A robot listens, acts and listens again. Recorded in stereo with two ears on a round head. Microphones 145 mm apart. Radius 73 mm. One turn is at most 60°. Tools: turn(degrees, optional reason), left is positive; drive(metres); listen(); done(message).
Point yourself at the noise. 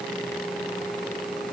listen()
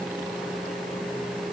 listen()
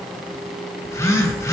turn(degrees=20, reason="The phone buzzing: about 20° left or 160° left.")
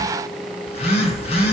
turn(degrees=60, reason="So it is at 140° left.")
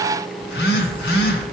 turn(degrees=60, reason="The phone buzzing is now 95° left.")
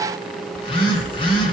turn(degrees=35, reason="The phone buzzing is now 35° left.")
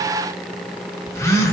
turn(degrees=20, reason="The phone buzzing is now 20° left.")
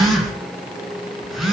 done("Facing the phone buzzing.")